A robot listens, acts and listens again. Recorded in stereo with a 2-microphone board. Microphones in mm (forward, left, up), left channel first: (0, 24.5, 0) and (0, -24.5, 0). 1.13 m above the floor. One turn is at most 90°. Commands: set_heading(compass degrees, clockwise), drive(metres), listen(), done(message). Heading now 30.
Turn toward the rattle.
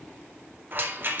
set_heading(80)
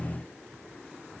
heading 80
listen()
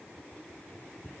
listen()
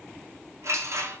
set_heading(160)
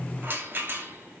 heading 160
set_heading(205)
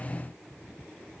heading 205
listen()
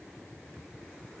listen()
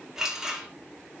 set_heading(215)
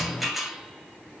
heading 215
done("Found it: a rattle, straight ahead, 1 to 2 m away.")